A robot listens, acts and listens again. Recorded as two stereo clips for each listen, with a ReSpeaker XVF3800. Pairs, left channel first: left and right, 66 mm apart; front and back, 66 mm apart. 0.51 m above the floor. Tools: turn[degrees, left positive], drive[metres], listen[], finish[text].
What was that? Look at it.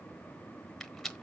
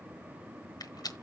Action: finish[Facing the rattle, 1 to 2 m away.]